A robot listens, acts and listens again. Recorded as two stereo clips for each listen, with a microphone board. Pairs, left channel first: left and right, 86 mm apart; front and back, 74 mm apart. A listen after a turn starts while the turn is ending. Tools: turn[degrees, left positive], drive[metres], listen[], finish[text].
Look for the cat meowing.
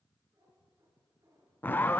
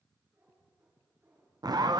Thought: The cat meowing: 130° right.
Action: turn[-130]
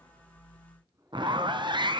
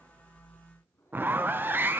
Thought: The cat meowing is now 50° right.
Action: turn[-50]
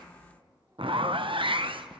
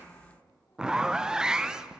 Action: listen[]
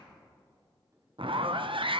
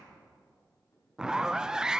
Action: listen[]
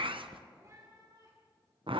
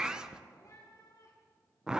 Thought: The cat meowing is now 40° right.
Action: turn[-40]
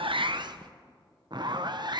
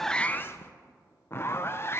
Action: listen[]
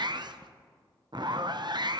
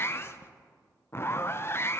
Action: listen[]
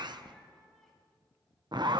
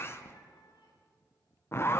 Action: finish[Found it: a cat meowing, straight ahead, over 4 m away.]